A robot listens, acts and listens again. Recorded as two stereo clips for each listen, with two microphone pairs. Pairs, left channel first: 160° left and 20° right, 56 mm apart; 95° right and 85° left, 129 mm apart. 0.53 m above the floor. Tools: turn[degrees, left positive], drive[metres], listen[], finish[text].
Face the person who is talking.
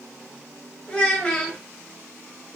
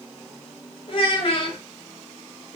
Thought: The child speaking: 130° right.
Action: turn[-130]
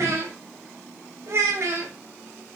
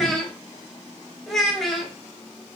Action: finish[Facing the child speaking, under 1 m away.]